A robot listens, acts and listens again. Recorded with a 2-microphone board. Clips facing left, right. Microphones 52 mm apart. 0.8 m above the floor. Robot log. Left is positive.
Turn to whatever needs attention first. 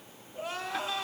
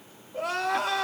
cmd yaw -90
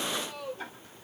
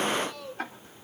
note: So it is at 10° left.
cmd yaw +10
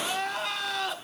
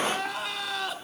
end: Facing the crying.